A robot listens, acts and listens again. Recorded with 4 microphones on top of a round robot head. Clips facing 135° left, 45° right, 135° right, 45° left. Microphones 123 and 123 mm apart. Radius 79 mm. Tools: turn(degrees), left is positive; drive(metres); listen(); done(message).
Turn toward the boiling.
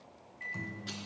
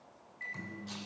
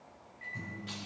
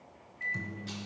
listen()
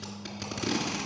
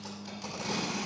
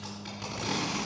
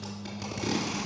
listen()
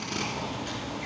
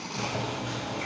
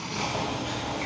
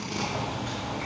turn(degrees=-60)
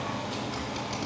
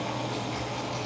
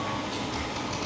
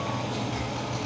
done("Facing the boiling, 2 to 4 m away.")